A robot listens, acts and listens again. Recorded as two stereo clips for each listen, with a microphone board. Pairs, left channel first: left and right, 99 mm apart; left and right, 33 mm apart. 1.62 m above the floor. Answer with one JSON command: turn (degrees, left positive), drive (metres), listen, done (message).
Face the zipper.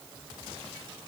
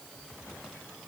{"listen": true}
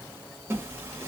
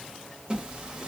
{"turn": -20}
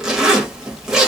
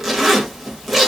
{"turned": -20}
{"done": "Found it: a zipper, straight ahead, under 1 m away."}